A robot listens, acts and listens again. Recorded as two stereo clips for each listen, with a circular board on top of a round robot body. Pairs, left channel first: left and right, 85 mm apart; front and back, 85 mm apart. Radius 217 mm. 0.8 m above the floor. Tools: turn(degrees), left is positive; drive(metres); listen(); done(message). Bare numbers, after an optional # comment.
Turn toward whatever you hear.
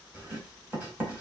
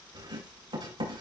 # The writing: 160° right.
turn(-160)
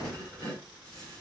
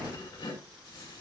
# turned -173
# The writing is now 10° left.
turn(10)
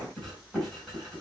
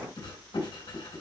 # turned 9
done("Facing the writing.")